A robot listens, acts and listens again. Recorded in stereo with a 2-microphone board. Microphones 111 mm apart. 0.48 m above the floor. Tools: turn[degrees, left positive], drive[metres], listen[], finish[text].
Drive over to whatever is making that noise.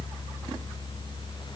Action: listen[]
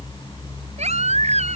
Action: turn[-90]
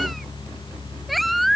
Action: drive[1.0]
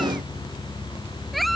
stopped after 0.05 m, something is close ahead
Action: listen[]
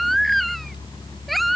Action: finish[Something is in my way. I am facing the baby crying but have not reached it.]